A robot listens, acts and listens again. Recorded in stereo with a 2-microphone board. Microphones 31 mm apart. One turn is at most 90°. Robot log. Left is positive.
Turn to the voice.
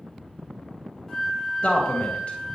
note: The man speaking: about 40° left or 140° left.
cmd yaw +40
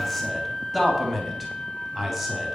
end: Found it: a man speaking, straight ahead, 2 to 4 m away.